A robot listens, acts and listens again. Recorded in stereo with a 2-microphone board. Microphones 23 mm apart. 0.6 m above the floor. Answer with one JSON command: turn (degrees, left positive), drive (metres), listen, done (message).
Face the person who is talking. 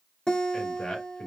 {"turn": 65}
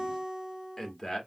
{"turn": 25}
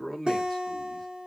{"turn": 15}
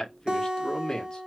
{"turn": 40}
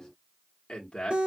{"turn": 45}
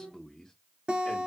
{"turn": 15}
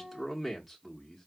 {"done": "Facing the man speaking, 1 to 2 m away."}